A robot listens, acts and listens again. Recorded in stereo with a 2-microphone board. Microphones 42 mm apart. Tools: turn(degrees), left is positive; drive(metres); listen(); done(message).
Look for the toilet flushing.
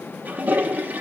turn(degrees=-40)
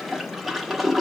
done("Facing the toilet flushing.")